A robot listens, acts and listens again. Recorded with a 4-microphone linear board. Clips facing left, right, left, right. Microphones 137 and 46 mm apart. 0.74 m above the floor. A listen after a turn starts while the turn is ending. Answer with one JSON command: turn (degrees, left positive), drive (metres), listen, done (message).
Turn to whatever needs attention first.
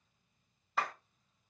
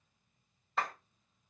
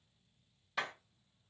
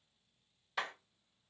{"listen": true}
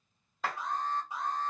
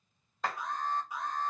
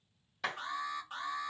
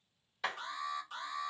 {"turn": 30}
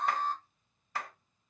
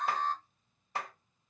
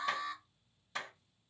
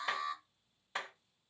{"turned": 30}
{"done": "Facing the alarm, 1 to 2 m away."}